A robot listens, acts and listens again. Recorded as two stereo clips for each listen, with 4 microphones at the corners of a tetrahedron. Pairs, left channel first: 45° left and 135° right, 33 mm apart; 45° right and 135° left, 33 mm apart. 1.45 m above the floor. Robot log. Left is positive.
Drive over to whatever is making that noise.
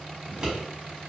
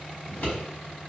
note: The scissors: 70° right.
cmd yaw -70
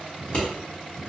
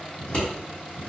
cmd fwd 1.0
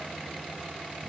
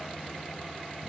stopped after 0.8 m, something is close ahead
cmd idle
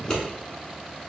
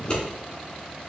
note: The scissors is now 10° right.
cmd yaw -10
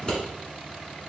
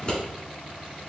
end: I am next to the scissors.